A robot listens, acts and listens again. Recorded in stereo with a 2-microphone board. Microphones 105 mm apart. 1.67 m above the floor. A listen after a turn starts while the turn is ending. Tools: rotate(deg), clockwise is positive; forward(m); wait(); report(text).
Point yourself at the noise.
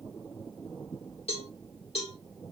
rotate(-70)
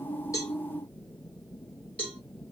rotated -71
rotate(-10)
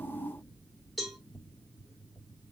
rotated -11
report("Facing the cowbell.")